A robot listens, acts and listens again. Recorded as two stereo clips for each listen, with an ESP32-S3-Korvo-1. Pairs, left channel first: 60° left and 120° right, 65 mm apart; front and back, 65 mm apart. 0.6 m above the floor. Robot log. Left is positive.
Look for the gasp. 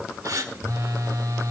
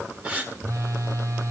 note: The gasp: 115° right.
cmd yaw -115
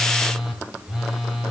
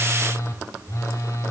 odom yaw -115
end: I heard a gasp from this way, but can't make it out now.